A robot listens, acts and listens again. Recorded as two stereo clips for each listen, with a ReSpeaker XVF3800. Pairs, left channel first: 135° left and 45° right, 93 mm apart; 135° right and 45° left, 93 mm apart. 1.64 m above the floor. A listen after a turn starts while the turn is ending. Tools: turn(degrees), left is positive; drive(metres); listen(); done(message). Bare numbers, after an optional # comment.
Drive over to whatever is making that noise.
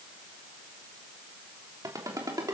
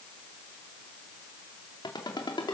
# The ringtone: 95° right.
turn(-95)
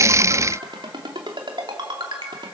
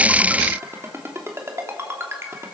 # The ringtone is now 15° right.
turn(-15)
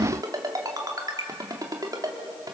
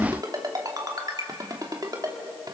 drive(1.0)
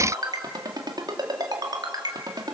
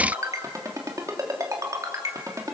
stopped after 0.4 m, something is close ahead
done("Blocked. The ringtone is further on, straight ahead.")